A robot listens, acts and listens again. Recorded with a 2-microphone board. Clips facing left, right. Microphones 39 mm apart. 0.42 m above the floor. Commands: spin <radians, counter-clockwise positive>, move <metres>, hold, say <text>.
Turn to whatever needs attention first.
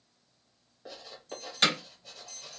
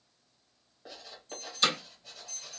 spin -0.61
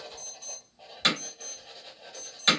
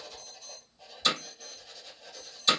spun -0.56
spin -0.17
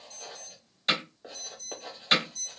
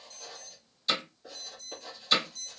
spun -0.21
say Found it: an alarm, straight ahead, 1 to 2 m away.